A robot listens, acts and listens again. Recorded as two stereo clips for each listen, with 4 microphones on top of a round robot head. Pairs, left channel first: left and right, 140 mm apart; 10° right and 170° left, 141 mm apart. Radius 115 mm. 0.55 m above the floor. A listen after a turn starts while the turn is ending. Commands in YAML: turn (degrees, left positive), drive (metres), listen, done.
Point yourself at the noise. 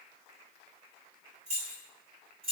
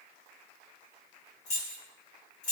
turn: -35
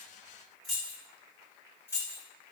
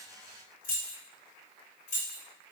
turn: 20
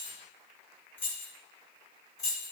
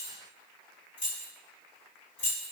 turn: 25
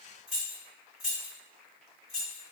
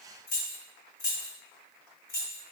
done: "Found it: keys jangling, straight ahead."